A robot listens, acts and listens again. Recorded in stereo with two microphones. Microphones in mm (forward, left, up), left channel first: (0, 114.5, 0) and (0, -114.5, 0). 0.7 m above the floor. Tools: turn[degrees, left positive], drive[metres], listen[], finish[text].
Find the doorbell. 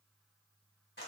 Action: listen[]
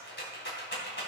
Action: listen[]
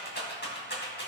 Action: finish[I can't make out a doorbell to turn to.]